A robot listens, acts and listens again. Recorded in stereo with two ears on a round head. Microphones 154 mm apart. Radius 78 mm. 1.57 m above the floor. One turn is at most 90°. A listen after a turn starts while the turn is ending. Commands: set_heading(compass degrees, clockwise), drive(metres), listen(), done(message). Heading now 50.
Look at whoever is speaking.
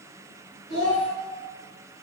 set_heading(340)
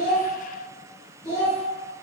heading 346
set_heading(321)
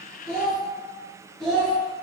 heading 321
done("Found it: a child speaking, straight ahead.")